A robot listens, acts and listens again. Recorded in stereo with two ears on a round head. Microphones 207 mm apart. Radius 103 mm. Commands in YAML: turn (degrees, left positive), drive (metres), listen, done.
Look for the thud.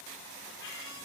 listen: true
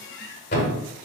turn: 50
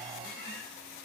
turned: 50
listen: true
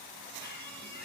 done: "I heard a thud, but can't make it out now. It was about straight ahead or 80° left."